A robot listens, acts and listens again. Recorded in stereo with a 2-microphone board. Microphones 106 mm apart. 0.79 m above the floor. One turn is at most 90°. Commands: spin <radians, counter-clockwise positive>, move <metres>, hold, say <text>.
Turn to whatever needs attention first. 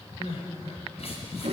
spin 1.57
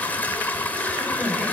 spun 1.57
say Facing the crying.